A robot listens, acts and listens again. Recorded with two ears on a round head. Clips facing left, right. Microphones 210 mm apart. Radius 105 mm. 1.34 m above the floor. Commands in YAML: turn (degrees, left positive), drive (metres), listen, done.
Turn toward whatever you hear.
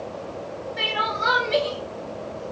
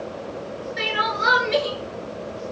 turn: -30
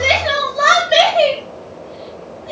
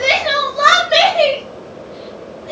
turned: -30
done: "Facing the crying, 1 to 2 m away."